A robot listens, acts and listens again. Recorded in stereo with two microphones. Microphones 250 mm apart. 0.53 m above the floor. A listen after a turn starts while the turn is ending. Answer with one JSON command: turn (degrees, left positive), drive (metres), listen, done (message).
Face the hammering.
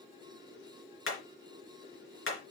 {"turn": 55}
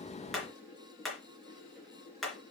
{"done": "Facing the hammering."}